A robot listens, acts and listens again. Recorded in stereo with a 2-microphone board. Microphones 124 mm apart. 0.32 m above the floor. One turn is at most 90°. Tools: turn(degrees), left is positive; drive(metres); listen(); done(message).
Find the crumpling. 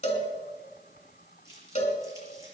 turn(degrees=-25)
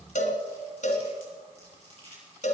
turn(degrees=-90)
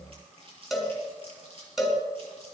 turn(degrees=-45)
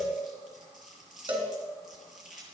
done("Facing the crumpling.")